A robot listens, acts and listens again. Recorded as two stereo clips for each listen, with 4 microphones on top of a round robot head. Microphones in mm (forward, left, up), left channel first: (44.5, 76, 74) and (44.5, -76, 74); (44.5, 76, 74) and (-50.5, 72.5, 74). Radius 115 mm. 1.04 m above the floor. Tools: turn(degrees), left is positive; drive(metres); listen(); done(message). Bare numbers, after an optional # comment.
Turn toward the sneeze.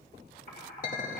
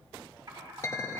listen()
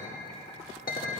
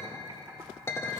listen()
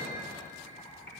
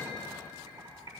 done("I can't make out a sneeze, only a clink and typing on a keyboard.")